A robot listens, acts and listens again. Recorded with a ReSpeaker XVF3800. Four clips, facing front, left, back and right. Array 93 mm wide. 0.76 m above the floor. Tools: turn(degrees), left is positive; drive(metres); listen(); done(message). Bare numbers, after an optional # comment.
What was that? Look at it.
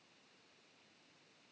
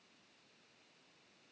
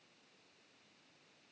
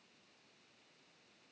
listen()
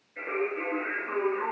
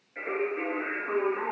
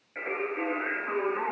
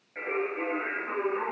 # The singing: 175° right.
turn(-175)
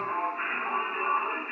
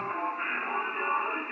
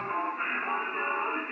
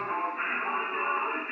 # The singing is now 50° right.
turn(-50)
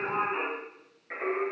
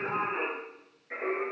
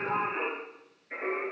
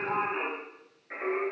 # The singing is now 10° right.
turn(-10)
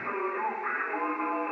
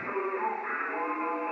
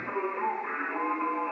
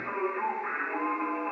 done("Found it: singing, straight ahead, 1 to 2 m away.")